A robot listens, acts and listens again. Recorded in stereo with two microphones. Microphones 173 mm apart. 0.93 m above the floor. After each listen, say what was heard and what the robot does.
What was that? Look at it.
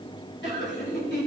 Turn 90° left.
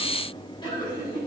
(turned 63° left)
So it is at 25° left. Turn 25° left.
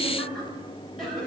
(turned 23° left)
Facing the laughter, over 4 m away.